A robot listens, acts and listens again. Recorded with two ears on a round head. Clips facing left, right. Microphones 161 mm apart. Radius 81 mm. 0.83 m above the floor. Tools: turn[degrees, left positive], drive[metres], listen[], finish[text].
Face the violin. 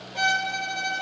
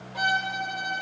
Thought: The violin: about 30° left or 150° left.
Action: turn[30]
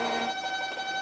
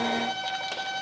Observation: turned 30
Action: finish[Facing the violin, under 1 m away.]